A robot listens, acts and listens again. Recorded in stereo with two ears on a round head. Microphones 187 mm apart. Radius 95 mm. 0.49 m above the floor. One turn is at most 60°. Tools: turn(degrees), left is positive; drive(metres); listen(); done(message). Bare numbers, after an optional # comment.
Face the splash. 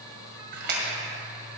# The splash: about 55° right or 125° right.
turn(-55)
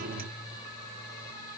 listen()
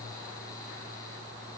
done("I heard a splash, but can't make it out now. It was about straight ahead or 70° right.")